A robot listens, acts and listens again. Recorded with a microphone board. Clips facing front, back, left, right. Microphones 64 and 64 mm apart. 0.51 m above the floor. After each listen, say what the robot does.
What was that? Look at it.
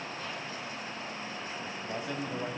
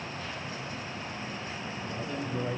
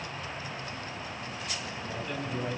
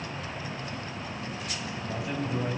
Turn 15° right.
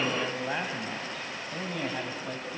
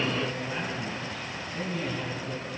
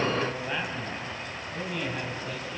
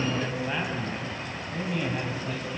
Turn 10° right.
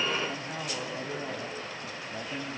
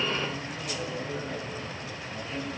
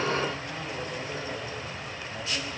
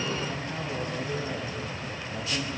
Turn 10° right.
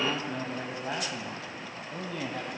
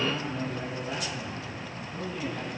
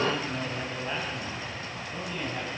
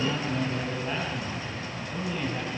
Facing the man speaking, over 4 m away.